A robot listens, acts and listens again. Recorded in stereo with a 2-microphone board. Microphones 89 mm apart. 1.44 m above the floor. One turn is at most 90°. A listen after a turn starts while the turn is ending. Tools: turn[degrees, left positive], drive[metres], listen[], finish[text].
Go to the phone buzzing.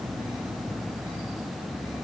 Action: listen[]
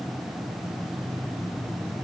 Action: listen[]
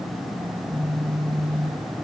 Action: turn[30]
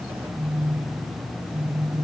Thought: So it is at 25° right.
Action: turn[-25]
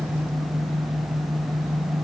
Action: drive[1.0]
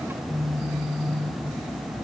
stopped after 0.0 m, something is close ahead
Action: finish[Something is in my way. I am facing the phone buzzing but have not reached it.]